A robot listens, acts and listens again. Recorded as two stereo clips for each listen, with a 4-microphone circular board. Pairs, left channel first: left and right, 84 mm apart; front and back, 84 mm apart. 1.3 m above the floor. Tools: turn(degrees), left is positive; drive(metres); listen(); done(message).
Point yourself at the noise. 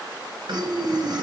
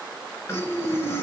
turn(degrees=-60)
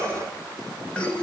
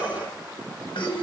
turn(degrees=15)
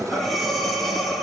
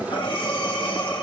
done("Found it: breathing, straight ahead, 1 to 2 m away.")